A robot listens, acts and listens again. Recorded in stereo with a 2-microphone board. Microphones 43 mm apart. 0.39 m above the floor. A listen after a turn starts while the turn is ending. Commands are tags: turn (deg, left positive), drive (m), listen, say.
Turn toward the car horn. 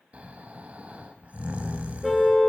<turn deg="30"/>
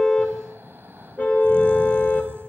<turn deg="145"/>
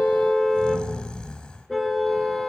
<say>Facing the car horn.</say>